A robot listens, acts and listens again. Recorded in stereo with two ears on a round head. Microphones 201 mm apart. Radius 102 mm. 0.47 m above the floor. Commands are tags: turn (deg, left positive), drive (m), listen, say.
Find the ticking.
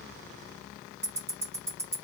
<turn deg="-30"/>
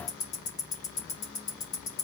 <turn deg="20"/>
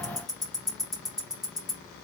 <say>Facing the ticking, 1 to 2 m away.</say>